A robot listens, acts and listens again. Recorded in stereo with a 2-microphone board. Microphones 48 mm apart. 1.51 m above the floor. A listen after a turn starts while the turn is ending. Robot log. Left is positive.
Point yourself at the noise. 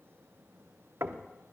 note: The knocking: about 65° right or 115° right.
cmd yaw -65
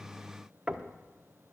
note: So it is at 15° right.
cmd yaw -15
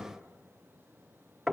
end: Found it: knocking, straight ahead, under 1 m away.